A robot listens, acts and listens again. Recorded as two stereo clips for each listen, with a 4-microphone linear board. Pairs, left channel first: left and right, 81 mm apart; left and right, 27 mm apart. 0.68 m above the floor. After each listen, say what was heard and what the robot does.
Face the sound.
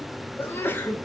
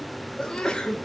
The sneeze: about 25° left or 155° left. Turn 25° left.
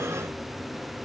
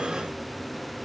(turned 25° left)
Keep listening.
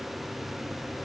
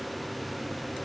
I heard a sneeze, but can't make it out now. It was about straight ahead or 130° left.